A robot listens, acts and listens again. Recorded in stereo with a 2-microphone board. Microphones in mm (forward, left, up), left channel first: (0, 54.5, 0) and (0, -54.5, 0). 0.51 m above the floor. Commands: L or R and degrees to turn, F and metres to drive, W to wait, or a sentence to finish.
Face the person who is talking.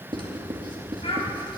L65
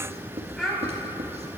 Found it: a child speaking, straight ahead.